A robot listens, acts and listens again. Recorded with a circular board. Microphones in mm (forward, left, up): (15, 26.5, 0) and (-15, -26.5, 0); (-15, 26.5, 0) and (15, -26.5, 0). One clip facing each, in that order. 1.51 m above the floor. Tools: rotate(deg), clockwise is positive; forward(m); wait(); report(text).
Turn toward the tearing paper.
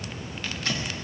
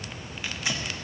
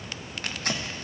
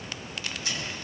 rotate(-160)
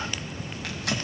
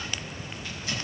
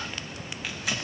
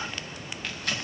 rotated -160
rotate(-35)
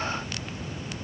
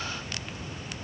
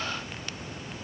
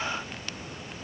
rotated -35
wait()
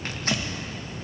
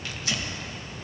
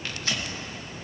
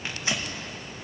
rotate(-10)
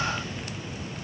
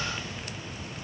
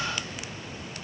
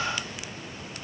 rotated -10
wait()
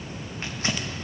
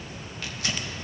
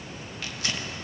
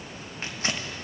report("Facing the tearing paper.")